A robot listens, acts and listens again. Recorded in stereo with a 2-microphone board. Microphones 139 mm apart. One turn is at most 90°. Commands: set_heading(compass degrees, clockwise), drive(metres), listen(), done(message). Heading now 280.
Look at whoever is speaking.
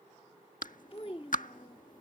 set_heading(235)
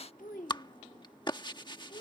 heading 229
set_heading(144)
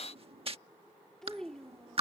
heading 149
done("Found it: a child speaking, straight ahead.")